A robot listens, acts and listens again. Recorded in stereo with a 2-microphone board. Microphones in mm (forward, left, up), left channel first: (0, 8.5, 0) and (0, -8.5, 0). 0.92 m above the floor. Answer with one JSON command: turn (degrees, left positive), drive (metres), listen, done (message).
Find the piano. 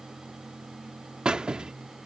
{"listen": true}
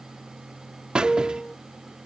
{"turn": 45}
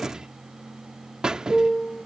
{"turn": 90}
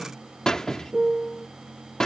{"turn": -10}
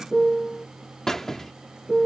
{"done": "Facing the piano."}